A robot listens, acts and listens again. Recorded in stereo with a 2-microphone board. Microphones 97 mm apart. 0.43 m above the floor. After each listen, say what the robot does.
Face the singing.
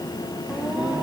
Turn 30° right.
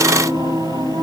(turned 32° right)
Turn 140° right.
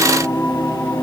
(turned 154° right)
Turn 15° left.
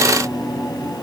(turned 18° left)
Facing the singing, 2 to 4 m away.